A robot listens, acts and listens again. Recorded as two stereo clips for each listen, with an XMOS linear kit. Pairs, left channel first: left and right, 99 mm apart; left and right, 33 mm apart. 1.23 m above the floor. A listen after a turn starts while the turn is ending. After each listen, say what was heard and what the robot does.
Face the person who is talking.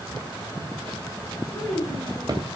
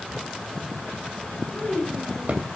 The child speaking: about 30° left or 150° left. Turn 30° left.
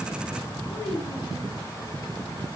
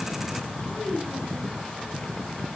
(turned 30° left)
Found it: a child speaking, straight ahead.